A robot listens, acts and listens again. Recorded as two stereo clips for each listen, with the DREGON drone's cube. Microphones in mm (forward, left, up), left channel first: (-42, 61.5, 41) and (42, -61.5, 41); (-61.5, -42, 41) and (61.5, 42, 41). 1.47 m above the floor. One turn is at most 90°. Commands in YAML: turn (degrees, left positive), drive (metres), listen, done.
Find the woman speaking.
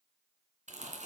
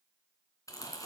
listen: true
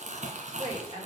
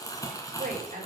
done: "Found it: a woman speaking, straight ahead, over 4 m away."